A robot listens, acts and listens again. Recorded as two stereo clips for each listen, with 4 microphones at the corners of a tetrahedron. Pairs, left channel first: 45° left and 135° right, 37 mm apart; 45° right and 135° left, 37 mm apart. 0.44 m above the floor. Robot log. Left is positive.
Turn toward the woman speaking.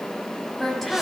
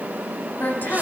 note: The woman speaking: 40° right.
cmd yaw -40
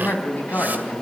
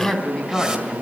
note: The woman speaking is now 15° left.
cmd yaw +15
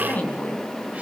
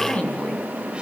end: Facing the woman speaking.